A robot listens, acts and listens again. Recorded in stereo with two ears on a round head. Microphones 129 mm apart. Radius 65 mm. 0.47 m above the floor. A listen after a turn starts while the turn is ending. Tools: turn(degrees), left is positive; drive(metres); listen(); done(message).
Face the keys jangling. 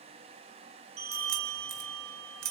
turn(degrees=-75)
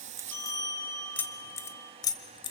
turn(degrees=35)
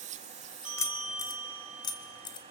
turn(degrees=35)
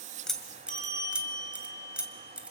turn(degrees=-10)
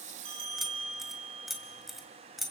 done("Facing the keys jangling.")